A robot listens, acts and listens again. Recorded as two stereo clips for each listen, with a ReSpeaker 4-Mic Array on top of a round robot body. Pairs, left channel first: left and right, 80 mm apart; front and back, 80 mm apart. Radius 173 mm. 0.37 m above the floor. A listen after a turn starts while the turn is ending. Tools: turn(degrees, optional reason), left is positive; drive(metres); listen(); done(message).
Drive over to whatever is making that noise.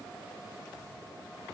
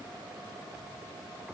listen()
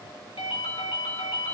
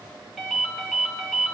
turn(degrees=95, reason="The ringtone: 95° left.")
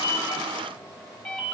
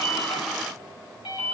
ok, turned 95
turn(degrees=10, reason="The ringtone is now 10° left.")
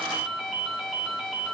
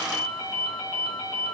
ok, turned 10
drive(metres=1.0)
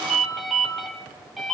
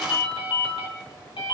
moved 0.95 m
drive(metres=1.0)
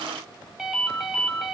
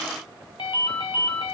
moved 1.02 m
drive(metres=1.0)
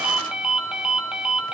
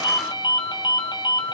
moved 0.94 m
turn(degrees=-10, reason="The ringtone is now 10° right.")
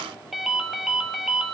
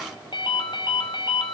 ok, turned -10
drive(metres=1.0)
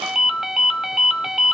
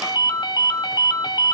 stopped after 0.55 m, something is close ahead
done("Arrived at the ringtone, straight ahead.")